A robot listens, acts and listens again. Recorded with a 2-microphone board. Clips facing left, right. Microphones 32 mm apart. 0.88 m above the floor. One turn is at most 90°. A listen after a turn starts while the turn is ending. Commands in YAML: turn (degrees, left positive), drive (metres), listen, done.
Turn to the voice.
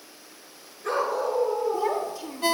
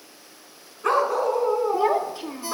turn: -35
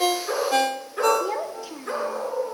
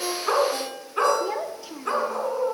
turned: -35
done: "Facing the child speaking."